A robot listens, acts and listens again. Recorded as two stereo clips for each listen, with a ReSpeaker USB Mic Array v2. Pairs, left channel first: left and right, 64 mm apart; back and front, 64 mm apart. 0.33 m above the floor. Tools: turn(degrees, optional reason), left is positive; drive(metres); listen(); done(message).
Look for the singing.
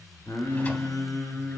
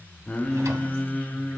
turn(degrees=115, reason="The singing: 115° left.")
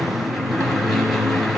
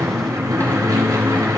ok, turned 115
listen()
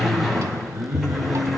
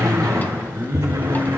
turn(degrees=-40, reason="The singing is now 40° right.")
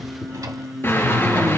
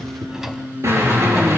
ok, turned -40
done("Facing the singing.")